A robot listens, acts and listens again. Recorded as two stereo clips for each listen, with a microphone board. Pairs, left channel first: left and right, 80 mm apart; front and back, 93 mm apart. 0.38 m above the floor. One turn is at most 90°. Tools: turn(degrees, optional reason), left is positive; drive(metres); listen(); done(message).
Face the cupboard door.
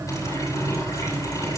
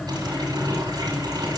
listen()
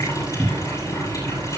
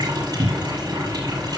turn(degrees=-90, reason="The cupboard door: 170° right.")
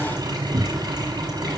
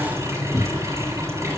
turn(degrees=-70, reason="The cupboard door is now 70° right.")
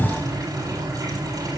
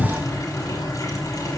done("Facing the cupboard door.")